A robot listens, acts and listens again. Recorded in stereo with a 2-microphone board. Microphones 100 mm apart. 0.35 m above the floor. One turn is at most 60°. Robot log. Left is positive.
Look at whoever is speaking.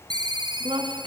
note: The woman speaking: about 65° right or 115° right.
cmd yaw -60
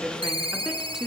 end: Facing the woman speaking.